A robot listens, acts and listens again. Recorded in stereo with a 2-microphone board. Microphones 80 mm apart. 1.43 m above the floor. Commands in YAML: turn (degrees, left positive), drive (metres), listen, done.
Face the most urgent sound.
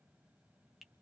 listen: true
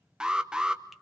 turn: -30
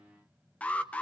turn: 20
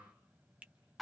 done: "Facing the alarm."